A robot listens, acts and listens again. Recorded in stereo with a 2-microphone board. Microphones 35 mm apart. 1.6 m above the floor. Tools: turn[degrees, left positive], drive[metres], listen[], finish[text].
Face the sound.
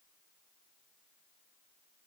Action: listen[]
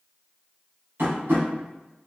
Action: turn[-90]
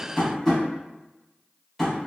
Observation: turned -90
Action: finish[Found it: tapping, straight ahead, 1 to 2 m away.]